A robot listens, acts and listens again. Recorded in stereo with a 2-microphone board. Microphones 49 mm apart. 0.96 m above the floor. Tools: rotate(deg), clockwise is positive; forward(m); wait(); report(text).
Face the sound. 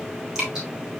rotate(30)
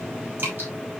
rotate(140)
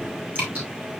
rotate(35)
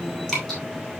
report("Found it: dripping, straight ahead.")